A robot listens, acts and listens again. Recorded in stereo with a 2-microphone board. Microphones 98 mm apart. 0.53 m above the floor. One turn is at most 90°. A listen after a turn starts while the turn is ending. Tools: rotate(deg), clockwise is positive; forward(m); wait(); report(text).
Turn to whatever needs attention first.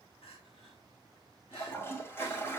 rotate(-70)
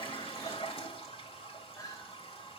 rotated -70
rotate(-35)
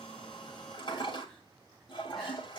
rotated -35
wait()
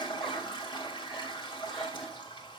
wait()
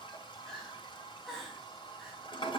report("Found it: crying, straight ahead.")